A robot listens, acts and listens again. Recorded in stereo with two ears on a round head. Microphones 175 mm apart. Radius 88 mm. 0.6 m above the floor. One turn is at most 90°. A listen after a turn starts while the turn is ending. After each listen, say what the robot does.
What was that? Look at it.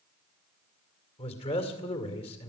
Turn 30° left.
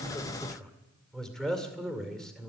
Found it: a man speaking, straight ahead.